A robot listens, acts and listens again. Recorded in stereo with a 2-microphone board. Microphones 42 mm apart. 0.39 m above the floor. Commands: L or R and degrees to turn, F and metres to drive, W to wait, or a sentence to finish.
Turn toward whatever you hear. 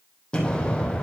L25
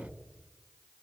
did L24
W
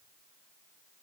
I heard an explosion, but can't make it out now. It was about straight ahead or 130° left.